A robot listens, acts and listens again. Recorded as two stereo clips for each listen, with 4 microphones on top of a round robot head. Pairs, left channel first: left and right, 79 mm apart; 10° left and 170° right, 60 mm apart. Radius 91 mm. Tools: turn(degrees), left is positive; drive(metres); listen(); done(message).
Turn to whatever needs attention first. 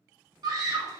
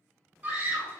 turn(degrees=-115)
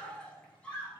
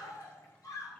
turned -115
turn(degrees=15)
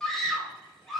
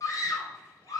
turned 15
done("Facing the scream, 2 to 4 m away.")